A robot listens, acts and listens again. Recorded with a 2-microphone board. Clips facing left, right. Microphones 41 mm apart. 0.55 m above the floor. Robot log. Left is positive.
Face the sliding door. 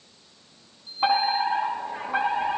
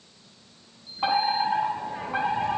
cmd yaw -90
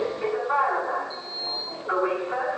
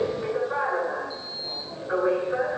end: Found it: a sliding door, straight ahead, 2 to 4 m away.